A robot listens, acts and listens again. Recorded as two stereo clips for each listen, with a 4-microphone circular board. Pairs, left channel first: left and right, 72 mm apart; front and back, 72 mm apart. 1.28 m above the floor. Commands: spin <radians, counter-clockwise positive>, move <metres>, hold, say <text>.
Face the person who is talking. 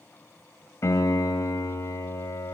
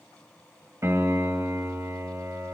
hold
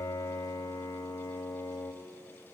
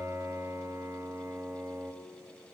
hold
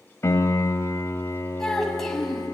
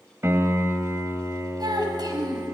spin 3.05
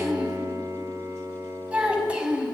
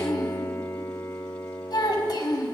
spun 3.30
spin -0.26
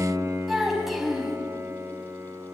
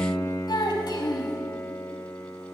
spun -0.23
say Facing the child speaking.